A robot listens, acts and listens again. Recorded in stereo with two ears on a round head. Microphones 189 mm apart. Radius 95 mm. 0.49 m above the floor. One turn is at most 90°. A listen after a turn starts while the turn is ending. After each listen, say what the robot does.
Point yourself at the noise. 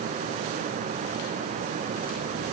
Keep listening.
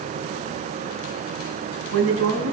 Turn 90° right.
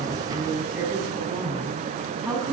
Found it: a woman speaking, straight ahead, 2 to 4 m away.